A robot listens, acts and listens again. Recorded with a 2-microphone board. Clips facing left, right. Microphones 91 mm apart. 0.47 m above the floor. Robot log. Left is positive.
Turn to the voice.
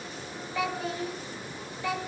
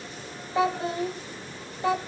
note: The child speaking: about 30° right or 150° right.
cmd yaw -30
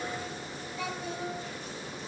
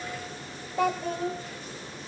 note: So it is at 115° right.
cmd yaw -115
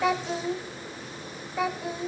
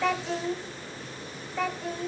note: The child speaking is now 10° left.
cmd yaw +10
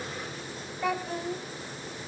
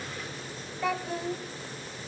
end: Found it: a child speaking, straight ahead, 1 to 2 m away.